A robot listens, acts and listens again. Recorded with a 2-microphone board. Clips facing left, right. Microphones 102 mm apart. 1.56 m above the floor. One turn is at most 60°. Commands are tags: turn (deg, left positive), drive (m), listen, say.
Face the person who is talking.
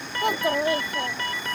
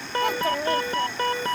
<turn deg="15"/>
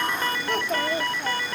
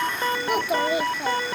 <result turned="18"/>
<turn deg="-15"/>
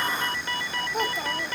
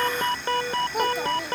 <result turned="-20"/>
<say>Found it: a child speaking, straight ahead.</say>